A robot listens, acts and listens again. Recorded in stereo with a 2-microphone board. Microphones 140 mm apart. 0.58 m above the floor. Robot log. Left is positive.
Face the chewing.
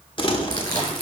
note: The chewing: about 35° left or 145° left.
cmd yaw +35
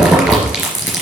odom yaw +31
end: Facing the chewing.